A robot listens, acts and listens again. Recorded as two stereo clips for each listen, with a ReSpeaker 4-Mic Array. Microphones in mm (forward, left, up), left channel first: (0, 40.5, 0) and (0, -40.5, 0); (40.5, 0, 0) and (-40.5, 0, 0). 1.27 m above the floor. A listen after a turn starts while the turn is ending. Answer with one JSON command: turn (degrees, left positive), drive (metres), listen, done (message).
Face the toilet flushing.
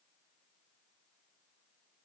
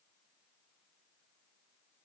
{"listen": true}
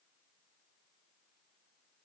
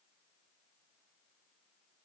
{"listen": true}
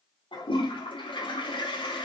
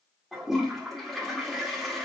{"turn": 90}
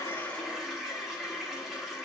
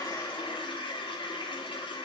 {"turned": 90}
{"done": "Found it: a toilet flushing, straight ahead."}